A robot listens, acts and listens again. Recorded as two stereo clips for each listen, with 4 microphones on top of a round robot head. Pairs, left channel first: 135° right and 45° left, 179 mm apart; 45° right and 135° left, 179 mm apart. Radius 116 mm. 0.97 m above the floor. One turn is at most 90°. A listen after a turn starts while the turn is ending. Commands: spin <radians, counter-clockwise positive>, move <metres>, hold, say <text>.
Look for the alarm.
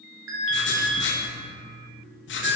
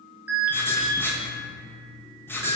spin 0.87
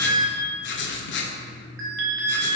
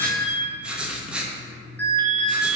spin 0.61
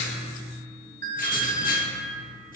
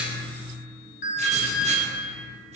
say Facing the alarm, 1 to 2 m away.